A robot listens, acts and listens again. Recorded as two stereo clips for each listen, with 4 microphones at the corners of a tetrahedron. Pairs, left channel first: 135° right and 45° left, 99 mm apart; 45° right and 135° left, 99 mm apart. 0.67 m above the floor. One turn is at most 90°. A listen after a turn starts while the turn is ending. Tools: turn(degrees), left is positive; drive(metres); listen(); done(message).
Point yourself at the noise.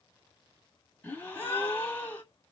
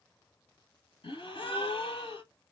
turn(degrees=-60)
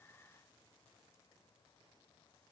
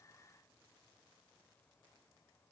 done("I heard a gasp from this way, but can't make it out now.")